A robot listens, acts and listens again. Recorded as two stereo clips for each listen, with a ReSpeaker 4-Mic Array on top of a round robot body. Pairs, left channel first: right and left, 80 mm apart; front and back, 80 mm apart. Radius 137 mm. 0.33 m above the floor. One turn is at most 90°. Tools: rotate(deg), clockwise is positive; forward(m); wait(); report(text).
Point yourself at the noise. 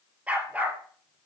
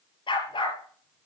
rotate(-20)
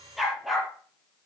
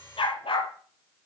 report("Facing the dog barking.")